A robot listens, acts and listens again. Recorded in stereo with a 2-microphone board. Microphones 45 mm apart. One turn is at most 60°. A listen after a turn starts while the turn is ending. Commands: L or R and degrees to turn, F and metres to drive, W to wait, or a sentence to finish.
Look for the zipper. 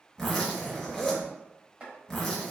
L30
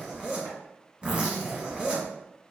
R30
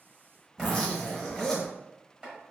L10
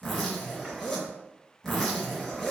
Found it: a zipper, straight ahead.